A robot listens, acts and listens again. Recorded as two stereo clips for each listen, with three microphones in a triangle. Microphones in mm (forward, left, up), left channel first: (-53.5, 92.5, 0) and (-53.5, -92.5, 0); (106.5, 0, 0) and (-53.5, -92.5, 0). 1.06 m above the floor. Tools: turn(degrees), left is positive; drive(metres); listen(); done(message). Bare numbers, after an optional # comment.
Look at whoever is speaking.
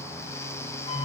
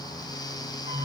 listen()
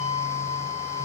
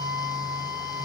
listen()
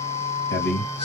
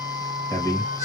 # The man speaking: 105° left.
turn(105)
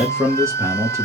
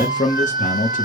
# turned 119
# The man speaking is now 15° right.
turn(-15)
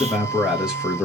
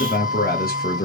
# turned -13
done("Facing the man speaking, 1 to 2 m away.")